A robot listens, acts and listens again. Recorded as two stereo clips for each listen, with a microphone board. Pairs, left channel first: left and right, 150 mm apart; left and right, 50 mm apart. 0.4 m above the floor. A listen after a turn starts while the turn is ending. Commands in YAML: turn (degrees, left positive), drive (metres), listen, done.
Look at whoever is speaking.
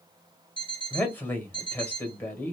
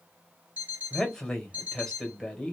turn: 30
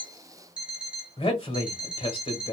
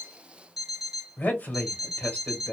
turn: 135
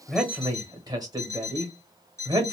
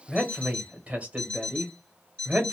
turn: -30
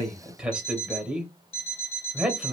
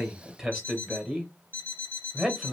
turn: -10
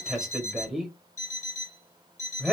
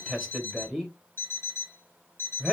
done: "Found it: a man speaking, straight ahead."